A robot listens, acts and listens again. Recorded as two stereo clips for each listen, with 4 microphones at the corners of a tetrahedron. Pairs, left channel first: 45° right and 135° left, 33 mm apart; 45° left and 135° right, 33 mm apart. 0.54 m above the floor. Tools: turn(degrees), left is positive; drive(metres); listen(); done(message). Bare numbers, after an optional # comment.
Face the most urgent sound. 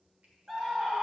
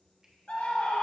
# The scream: 70° left.
turn(70)
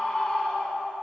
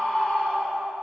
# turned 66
done("Facing the scream, 1 to 2 m away.")